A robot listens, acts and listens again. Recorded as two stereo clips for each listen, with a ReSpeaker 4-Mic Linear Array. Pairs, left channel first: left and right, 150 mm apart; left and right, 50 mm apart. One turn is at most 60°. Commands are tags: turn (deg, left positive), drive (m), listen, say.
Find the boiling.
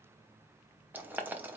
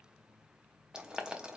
<turn deg="-30"/>
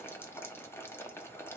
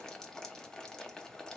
<turn deg="15"/>
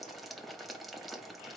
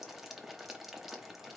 <say>Facing the boiling.</say>